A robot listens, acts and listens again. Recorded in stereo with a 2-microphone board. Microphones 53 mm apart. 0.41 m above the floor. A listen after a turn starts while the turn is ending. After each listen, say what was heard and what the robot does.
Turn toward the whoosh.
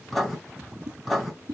Turn 90° right.
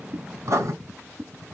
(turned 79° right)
Found it: a whoosh, straight ahead, under 1 m away.